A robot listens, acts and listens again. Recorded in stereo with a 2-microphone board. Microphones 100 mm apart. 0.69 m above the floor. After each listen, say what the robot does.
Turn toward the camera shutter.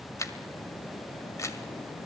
Turn 30° left.
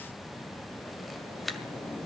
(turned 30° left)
Facing the camera shutter.